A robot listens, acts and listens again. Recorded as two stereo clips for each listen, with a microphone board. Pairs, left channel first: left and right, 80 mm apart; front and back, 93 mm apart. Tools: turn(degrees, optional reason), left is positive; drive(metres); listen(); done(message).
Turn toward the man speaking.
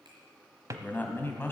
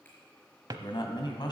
turn(degrees=30, reason="The man speaking: 30° left.")
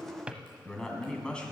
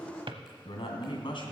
turn(degrees=15, reason="The man speaking is now 15° left.")
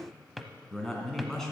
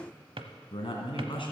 done("Facing the man speaking.")